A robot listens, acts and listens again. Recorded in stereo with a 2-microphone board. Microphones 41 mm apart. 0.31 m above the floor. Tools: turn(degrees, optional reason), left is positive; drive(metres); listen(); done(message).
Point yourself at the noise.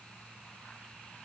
listen()
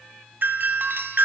turn(degrees=-55, reason="The doorbell: about 55° right or 125° right.")
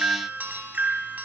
turn(degrees=-55, reason="So it is at 55° right.")
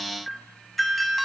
done("Facing the doorbell, 2 to 4 m away.")